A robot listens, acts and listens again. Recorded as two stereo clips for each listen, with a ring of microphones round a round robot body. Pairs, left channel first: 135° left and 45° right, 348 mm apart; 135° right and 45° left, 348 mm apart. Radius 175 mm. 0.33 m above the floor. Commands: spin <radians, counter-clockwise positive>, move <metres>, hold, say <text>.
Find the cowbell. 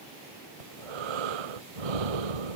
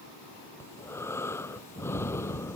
hold
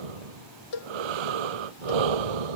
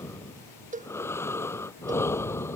spin 2.01
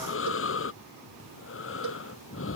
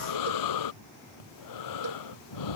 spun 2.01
hold
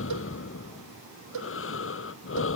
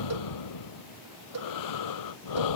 say Facing the cowbell.